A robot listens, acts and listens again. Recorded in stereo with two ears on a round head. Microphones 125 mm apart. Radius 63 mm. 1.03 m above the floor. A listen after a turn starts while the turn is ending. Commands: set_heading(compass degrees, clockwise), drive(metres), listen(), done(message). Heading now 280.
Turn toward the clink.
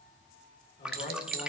set_heading(355)
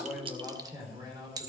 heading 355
set_heading(20)
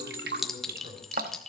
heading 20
done("Facing the clink.")